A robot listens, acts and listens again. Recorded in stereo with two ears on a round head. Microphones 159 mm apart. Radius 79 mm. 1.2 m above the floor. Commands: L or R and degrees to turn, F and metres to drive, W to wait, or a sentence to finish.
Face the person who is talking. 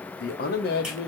L60
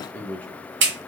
L10
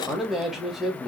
Facing the man speaking, 1 to 2 m away.